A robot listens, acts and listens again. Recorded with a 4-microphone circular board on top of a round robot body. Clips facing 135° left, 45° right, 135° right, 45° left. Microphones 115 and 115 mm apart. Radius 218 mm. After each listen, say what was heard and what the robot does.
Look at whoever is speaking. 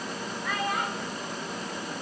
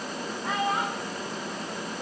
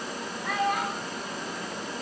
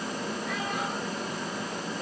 The child speaking: 110° right. Turn 110° right.
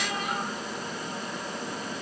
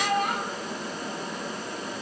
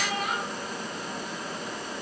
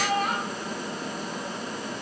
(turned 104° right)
Found it: a child speaking, straight ahead.